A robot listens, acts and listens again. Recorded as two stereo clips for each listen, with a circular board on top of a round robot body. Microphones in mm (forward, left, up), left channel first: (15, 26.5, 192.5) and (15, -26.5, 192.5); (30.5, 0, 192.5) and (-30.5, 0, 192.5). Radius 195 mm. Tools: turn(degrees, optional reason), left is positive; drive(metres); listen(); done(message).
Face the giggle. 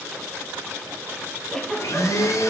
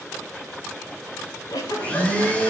turn(degrees=15, reason="The giggle: 15° left.")
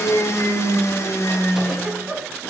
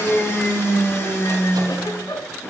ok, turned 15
done("Facing the giggle, over 4 m away.")